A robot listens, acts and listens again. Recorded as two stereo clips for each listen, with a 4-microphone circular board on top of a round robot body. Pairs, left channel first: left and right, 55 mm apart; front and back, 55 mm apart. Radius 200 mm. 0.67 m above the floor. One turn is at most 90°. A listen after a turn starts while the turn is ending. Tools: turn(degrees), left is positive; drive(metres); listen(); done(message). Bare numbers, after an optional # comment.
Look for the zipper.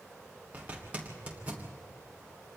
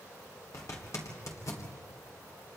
# The zipper: 25° right.
turn(-25)
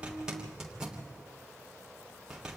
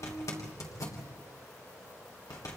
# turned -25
# The zipper is now 15° right.
turn(-15)
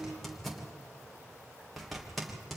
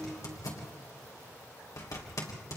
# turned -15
done("Found it: a zipper, straight ahead, 2 to 4 m away.")